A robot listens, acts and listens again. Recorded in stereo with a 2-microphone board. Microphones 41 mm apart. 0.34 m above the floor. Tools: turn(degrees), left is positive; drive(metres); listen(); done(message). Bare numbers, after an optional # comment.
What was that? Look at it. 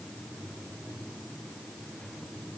listen()
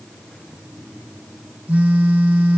# The phone buzzing: about 40° right or 140° right.
turn(-40)
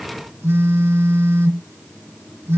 # So it is at 95° right.
turn(-95)
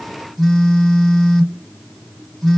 done("Found it: a phone buzzing, straight ahead, 1 to 2 m away.")